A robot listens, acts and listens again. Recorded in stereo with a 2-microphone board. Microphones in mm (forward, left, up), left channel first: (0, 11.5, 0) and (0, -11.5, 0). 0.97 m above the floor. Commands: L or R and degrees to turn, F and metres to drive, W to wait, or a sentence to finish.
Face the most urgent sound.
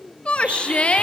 L60
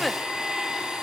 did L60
W
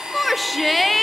Facing the shout, 1 to 2 m away.